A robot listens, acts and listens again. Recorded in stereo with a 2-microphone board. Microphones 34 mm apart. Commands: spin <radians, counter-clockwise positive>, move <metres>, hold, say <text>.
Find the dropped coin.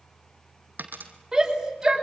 spin -0.96
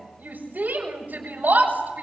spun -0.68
hold
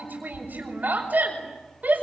say I heard a dropped coin, but can't make it out now. It was about 15° right or 85° right.